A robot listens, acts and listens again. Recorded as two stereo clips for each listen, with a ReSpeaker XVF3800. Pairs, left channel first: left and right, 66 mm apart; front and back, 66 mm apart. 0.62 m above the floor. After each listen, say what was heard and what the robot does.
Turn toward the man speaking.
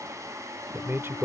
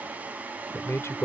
The man speaking: 40° right. Turn 40° right.
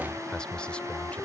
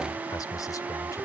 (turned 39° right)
The man speaking is now 10° left. Turn 10° left.
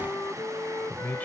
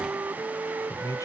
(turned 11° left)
The man speaking is now 25° left. Turn 25° left.
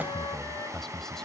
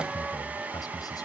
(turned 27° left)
Found it: a man speaking, straight ahead.